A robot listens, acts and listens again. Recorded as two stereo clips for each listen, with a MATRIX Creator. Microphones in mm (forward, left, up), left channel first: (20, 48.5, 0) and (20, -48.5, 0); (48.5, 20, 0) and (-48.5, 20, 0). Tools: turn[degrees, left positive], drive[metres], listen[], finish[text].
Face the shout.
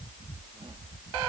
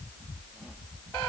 Action: listen[]
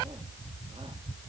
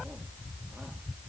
Action: listen[]
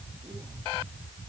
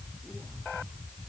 Action: finish[I can't make out a shout to turn to.]